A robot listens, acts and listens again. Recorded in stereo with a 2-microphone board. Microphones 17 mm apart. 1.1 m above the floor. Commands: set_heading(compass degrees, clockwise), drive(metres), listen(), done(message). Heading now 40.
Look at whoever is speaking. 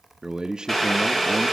set_heading(90)
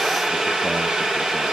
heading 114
listen()
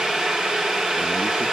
listen()
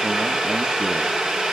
done("I heard a man speaking, but can't make it out now. It was about 25° left or 55° right.")